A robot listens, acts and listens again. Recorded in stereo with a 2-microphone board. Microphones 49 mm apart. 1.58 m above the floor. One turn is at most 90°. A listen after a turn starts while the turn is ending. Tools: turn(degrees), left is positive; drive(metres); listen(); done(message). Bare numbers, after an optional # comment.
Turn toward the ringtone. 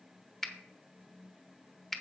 listen()
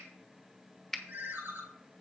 # The ringtone: about 40° right or 140° right.
turn(-40)
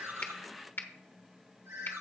# So it is at 95° right.
turn(-90)
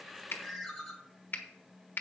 done("Facing the ringtone, 1 to 2 m away.")